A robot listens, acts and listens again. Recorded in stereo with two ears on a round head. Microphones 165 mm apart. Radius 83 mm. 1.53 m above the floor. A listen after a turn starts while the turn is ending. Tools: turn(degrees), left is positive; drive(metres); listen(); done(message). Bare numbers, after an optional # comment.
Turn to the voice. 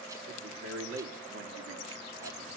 turn(-90)
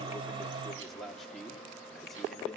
done("Facing the man speaking, 2 to 4 m away.")